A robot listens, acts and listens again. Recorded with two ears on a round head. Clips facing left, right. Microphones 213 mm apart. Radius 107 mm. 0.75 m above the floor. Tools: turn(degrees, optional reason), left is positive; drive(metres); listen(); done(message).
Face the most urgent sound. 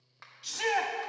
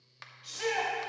turn(degrees=60, reason="The shout: about 60° left or 120° left.")
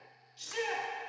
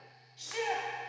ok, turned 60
turn(degrees=10, reason="So it is at 10° left.")
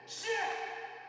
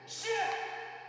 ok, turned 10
done("Facing the shout, 1 to 2 m away.")